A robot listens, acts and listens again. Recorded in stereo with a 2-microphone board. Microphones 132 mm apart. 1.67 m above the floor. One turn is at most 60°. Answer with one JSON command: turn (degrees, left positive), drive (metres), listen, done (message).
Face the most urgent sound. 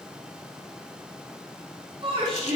{"turn": -45}
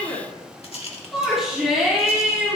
{"done": "Found it: a shout, straight ahead, over 4 m away."}